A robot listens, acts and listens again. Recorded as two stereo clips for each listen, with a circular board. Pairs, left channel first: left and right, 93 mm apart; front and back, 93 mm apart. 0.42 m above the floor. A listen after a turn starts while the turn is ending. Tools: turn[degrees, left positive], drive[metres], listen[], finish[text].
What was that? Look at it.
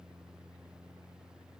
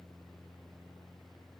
Action: listen[]
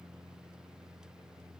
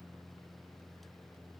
Action: listen[]
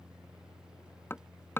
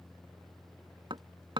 Thought: The hammering: 155° left.
Action: turn[155]
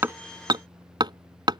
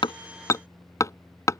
Thought: The hammering is now 55° right.
Action: turn[-55]
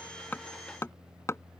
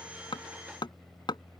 Thought: The hammering is now 30° left.
Action: turn[30]
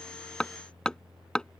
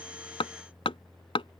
Thought: The hammering is now 10° left.
Action: turn[10]
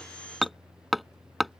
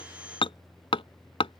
Action: finish[Found it: hammering, straight ahead.]